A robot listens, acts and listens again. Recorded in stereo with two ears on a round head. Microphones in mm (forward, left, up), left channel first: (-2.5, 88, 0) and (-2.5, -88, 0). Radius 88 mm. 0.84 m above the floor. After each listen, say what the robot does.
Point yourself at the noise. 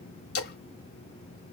Turn 55° left.
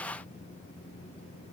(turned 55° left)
Keep listening.
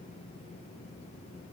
I heard a splash, but can't make it out now. It was about straight ahead or 70° left.